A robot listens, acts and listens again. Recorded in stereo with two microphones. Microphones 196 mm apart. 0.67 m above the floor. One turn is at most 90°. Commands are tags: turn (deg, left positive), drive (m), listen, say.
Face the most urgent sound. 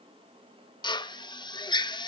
<listen/>
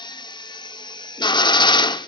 <listen/>
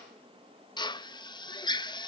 <say>I can't make out anything urgent to turn to.</say>